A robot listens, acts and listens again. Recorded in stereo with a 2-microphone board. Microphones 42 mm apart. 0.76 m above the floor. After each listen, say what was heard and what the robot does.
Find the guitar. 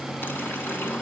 Keep listening.
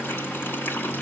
Keep listening.
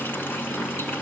I can't make out a guitar.